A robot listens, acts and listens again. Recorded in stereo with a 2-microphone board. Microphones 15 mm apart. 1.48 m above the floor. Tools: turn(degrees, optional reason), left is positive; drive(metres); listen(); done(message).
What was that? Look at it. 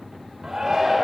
turn(degrees=-50, reason="The shout: about 50° right or 130° right.")
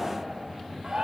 turn(degrees=-80, reason="So it is at 80° right.")
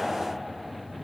listen()
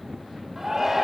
turn(degrees=-25, reason="The shout is now 25° right.")
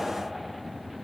listen()
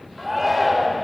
done("Facing the shout, over 4 m away.")